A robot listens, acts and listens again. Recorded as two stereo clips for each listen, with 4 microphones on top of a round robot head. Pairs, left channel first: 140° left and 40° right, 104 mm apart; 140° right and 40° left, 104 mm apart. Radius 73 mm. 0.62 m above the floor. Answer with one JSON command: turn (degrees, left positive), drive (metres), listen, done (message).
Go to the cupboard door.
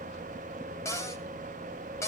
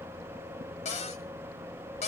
{"turn": -155}
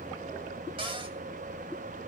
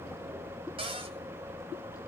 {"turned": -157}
{"drive": 1.0}
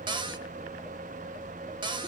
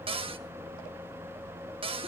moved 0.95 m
{"drive": 1.0}
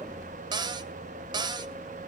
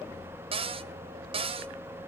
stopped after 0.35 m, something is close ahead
{"turn": 10}
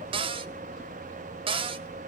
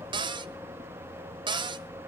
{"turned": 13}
{"done": "Arrived at the cupboard door, straight ahead."}